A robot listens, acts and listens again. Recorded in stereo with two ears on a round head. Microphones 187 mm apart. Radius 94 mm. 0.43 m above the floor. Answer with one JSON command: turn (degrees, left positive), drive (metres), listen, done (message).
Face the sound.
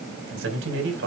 {"turn": -65}
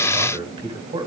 {"turn": -25}
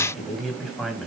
{"done": "Facing the man speaking, 2 to 4 m away."}